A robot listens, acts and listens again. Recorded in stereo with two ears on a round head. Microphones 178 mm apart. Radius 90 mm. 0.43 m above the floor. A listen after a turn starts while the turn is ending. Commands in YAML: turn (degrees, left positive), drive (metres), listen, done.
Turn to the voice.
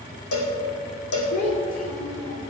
turn: 40
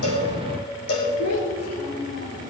turn: 100
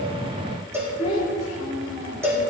turn: 35
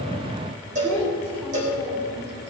turn: 10
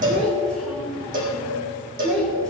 done: "Facing the child speaking."